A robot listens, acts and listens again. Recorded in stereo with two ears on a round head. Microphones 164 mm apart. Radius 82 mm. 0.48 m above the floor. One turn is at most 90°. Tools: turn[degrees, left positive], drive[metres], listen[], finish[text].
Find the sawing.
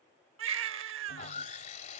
Thought: The sawing: about 40° left or 140° left.
Action: turn[40]
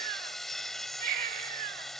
Action: finish[Facing the sawing.]